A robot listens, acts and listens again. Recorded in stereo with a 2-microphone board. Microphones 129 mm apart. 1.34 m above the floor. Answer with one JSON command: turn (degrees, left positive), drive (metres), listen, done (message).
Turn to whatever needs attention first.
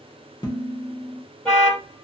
{"turn": 30}
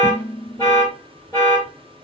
{"turn": 145}
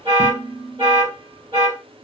{"turn": -40}
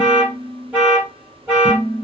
{"turn": -10}
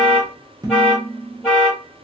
{"done": "Facing the alarm, 1 to 2 m away."}